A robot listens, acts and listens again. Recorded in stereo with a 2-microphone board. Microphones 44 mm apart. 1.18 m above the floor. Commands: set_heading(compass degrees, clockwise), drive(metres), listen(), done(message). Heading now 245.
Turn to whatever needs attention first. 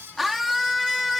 set_heading(275)
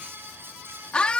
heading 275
set_heading(250)
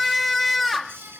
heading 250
done("Found it: a scream, straight ahead.")